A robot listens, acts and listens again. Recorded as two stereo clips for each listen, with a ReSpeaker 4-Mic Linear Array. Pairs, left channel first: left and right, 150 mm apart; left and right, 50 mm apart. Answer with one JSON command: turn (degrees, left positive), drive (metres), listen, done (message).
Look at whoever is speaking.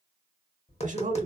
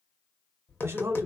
{"turn": -55}
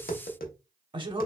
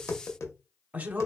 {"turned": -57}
{"turn": -40}
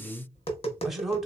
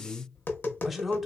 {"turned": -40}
{"done": "Facing the man speaking, 1 to 2 m away."}